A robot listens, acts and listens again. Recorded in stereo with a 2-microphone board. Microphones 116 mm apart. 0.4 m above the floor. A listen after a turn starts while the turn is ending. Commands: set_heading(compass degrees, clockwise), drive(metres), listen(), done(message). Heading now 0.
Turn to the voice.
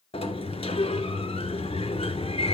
listen()
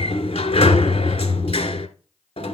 listen()
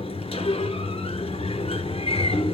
done("I can't make out anyone speaking to turn to.")